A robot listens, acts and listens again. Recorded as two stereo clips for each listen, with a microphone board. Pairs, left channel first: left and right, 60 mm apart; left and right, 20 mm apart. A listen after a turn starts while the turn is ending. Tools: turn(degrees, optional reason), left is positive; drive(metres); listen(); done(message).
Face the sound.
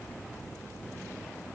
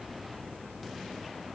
listen()
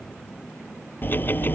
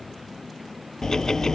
turn(degrees=35, reason="The ticking: about 35° left or 145° left.")
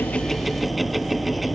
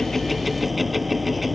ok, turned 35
done("Facing the ticking.")